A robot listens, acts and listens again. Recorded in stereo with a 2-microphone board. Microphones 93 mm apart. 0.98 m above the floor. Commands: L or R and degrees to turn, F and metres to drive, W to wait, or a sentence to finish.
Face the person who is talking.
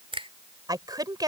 R45
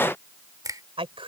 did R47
R90
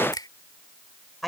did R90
Facing the woman speaking.